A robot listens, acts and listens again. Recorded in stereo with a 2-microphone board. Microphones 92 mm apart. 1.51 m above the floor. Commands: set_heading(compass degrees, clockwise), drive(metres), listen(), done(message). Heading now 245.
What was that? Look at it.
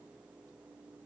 listen()
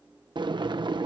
set_heading(300)
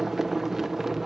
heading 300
done("Found it: boiling, straight ahead.")